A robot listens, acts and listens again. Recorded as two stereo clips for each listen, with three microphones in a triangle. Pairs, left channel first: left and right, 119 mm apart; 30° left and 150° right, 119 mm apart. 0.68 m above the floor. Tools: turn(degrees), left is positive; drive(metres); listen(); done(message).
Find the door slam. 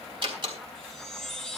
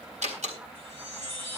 turn(degrees=-135)
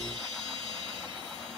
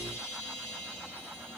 done("Facing where the door slam came from. I can't hear it now.")